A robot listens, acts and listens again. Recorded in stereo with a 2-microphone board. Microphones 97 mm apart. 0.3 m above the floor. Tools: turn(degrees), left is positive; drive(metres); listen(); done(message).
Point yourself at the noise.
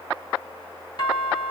turn(degrees=50)
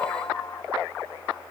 listen()
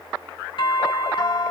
turn(degrees=75)
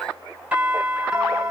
turn(degrees=-10)
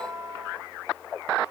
done("Facing the doorbell, 2 to 4 m away.")